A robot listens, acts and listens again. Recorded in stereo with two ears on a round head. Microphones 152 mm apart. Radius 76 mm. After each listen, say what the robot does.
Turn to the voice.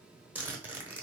Keep listening.
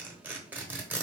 Keep listening.
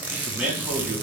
Turn 30° right.
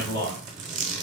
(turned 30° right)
Turn 25° left.
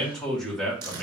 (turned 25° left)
Facing the man speaking.